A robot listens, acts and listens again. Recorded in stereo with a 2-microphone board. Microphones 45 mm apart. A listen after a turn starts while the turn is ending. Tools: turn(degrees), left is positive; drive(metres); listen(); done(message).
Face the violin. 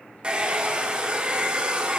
listen()
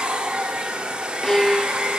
turn(degrees=30)
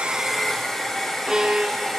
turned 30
turn(degrees=-20)
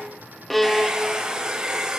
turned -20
done("Found it: a violin, straight ahead.")